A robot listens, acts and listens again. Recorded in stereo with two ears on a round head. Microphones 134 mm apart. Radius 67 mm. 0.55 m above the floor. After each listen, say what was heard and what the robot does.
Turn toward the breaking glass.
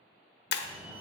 The breaking glass: about 75° left or 105° left. Turn 75° left.
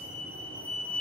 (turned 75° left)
Keep listening.
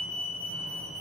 I heard breaking glass, but can't make it out now. It was about straight ahead or 30° left.